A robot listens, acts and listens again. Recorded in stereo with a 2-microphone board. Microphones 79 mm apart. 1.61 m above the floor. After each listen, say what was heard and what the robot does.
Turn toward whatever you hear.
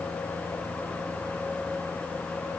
Keep listening.
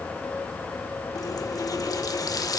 The running tap: about 50° left or 130° left. Turn 50° left.
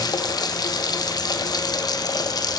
So it is at 70° left. Turn 70° left.
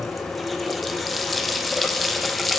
Found it: a running tap, straight ahead, 1 to 2 m away.